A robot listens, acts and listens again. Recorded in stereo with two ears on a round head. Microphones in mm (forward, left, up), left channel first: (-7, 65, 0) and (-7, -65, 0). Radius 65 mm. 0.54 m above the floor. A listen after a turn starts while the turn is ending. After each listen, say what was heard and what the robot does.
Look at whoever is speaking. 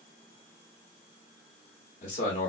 The man speaking: about 55° left or 125° left. Turn 55° left.
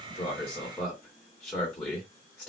So it is at 10° left. Turn 10° left.
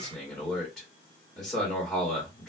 Found it: a man speaking, straight ahead.